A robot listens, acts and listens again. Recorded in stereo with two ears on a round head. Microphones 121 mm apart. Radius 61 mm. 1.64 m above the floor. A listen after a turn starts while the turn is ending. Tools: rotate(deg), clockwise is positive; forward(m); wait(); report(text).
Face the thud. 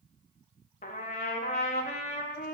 wait()
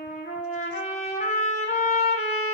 wait()
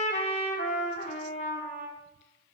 report("I can't make out a thud, only a trumpet.")